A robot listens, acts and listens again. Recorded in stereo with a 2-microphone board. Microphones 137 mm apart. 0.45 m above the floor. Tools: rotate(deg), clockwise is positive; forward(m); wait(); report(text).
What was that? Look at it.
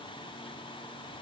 wait()
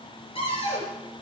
rotate(-45)
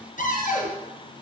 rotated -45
rotate(-90)
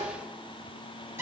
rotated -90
rotate(15)
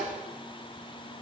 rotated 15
wait()
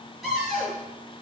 report("Facing the cupboard door, over 4 m away.")